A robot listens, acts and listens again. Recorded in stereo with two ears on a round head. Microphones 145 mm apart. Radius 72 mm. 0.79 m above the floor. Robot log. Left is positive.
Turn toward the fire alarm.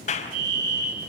note: The fire alarm: about 50° right or 130° right.
cmd yaw -50
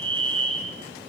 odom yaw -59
note: So it is at 10° left.
cmd yaw +10
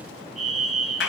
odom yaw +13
end: Facing the fire alarm.